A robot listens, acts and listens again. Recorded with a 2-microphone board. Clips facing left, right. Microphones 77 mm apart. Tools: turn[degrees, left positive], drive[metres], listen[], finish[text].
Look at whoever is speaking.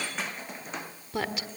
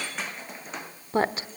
Thought: The woman speaking: about 35° right or 145° right.
Action: turn[-35]
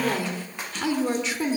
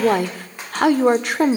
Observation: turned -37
Thought: So it is at 100° right.
Action: turn[-100]
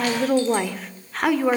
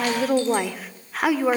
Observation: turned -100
Action: finish[Facing the woman speaking.]